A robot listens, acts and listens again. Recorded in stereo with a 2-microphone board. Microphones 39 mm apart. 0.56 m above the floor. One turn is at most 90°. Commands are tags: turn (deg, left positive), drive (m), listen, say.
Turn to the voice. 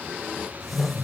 <listen/>
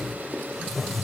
<listen/>
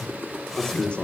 <turn deg="30"/>
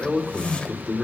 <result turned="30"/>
<say>Found it: a man speaking, straight ahead.</say>